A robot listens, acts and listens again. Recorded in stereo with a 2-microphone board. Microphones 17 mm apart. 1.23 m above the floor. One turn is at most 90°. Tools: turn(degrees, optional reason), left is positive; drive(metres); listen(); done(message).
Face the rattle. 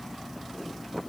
listen()
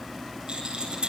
turn(degrees=-90)
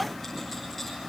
listen()
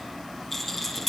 done("Found it: a rattle, straight ahead, over 4 m away.")